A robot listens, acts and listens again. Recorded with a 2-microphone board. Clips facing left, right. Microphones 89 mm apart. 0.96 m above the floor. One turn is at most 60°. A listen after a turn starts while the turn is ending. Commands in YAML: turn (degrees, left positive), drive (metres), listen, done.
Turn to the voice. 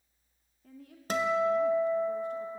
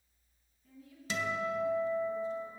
turn: 60
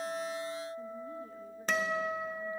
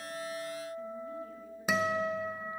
listen: true
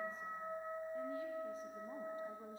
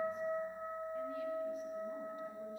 listen: true
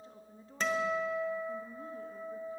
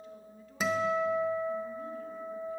turn: 35
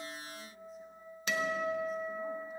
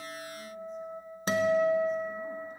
listen: true
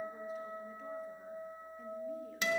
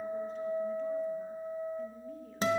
listen: true
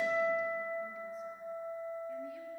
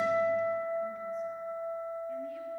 done: "Facing where the woman speaking came from. I can't hear it now."